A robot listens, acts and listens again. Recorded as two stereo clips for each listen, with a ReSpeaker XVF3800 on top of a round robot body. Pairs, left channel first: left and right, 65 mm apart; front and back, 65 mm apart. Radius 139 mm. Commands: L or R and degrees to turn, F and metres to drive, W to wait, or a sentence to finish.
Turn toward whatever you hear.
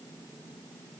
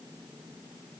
W
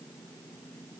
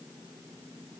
W
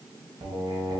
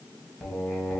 R80
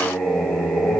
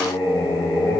L10
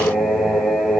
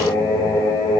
Found it: singing, straight ahead.